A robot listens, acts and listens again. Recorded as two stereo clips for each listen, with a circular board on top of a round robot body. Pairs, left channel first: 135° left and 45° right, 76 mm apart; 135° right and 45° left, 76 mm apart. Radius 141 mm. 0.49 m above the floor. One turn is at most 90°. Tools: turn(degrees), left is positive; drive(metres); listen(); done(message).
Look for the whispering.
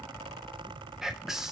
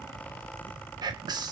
turn(degrees=40)
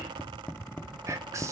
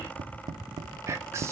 done("Facing the whispering, 2 to 4 m away.")